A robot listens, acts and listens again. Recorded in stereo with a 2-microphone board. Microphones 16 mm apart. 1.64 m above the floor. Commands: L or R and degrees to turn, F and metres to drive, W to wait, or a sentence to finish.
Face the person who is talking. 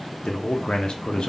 L70
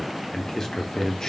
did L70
L40
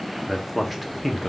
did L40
Facing the man speaking.